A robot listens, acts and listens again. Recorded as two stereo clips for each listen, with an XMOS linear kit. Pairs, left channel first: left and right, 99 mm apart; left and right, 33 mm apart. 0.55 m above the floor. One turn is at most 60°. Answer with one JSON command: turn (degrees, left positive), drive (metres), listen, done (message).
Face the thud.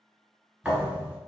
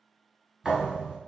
{"turn": -30}
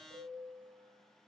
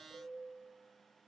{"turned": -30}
{"listen": true}
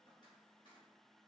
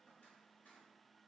{"done": "I heard a thud, but can't make it out now. It was about 20° left or 140° right."}